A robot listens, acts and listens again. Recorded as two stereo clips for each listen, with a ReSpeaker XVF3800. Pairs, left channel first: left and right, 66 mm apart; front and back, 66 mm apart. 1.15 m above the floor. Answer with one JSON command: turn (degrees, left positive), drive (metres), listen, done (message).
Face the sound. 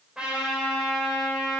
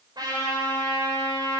{"turn": -170}
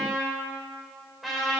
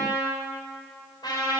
{"done": "Found it: a trumpet, straight ahead."}